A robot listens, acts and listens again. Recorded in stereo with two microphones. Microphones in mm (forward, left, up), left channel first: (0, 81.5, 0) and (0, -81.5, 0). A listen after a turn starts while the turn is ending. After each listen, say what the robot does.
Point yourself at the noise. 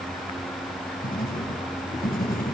Turn 60° left.
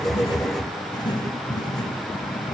Turn 30° left.
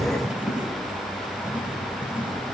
Facing the writing.